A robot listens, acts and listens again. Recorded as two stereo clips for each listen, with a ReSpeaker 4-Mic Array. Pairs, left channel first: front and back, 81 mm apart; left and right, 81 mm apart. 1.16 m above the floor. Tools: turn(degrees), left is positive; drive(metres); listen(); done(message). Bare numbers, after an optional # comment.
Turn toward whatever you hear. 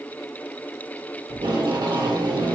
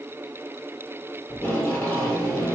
# The tape being pulled: 165° left.
turn(165)
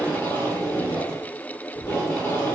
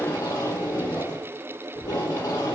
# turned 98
# The tape being pulled is now 65° left.
turn(65)
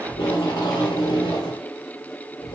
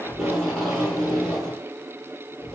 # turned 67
done("Facing the tape being pulled, 1 to 2 m away.")